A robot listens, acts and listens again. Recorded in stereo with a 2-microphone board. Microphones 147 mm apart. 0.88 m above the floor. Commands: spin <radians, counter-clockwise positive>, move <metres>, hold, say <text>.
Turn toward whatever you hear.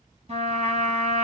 spin -0.79
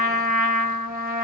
spin -1.57
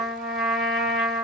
say Found it: a trumpet, straight ahead, 2 to 4 m away.